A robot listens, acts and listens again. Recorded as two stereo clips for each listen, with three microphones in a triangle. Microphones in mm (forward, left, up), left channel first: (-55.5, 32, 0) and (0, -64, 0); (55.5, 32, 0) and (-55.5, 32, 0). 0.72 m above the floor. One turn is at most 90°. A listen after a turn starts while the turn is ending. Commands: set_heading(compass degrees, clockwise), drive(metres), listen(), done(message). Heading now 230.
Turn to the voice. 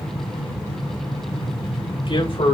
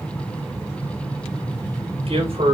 set_heading(140)
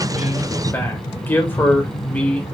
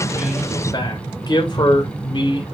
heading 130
set_heading(90)
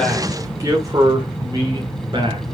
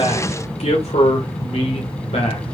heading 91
set_heading(111)
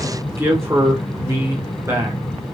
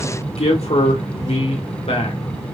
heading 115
done("Facing the man speaking, 2 to 4 m away.")